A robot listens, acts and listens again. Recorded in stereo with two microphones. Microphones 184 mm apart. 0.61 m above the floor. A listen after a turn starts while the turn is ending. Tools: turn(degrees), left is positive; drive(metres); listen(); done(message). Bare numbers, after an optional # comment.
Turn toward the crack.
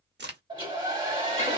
# The crack: about 70° right or 110° right.
turn(-70)
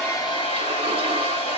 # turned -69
listen()
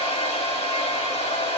done("I heard a crack, but can't make it out now. It was about straight ahead or 40° right.")